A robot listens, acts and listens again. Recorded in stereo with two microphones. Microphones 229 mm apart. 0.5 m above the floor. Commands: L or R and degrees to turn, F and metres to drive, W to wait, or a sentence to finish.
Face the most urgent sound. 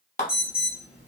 R55
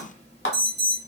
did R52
R55
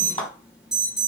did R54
Facing the alarm.